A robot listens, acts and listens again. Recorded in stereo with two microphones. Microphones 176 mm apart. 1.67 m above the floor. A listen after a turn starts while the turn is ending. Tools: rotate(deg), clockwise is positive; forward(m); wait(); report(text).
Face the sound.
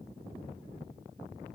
wait()
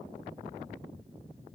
wait()
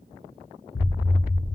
rotate(-55)
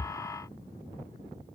wait()
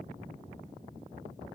report("I heard an explosion, but can't make it out now. It was about straight ahead or 70° left.")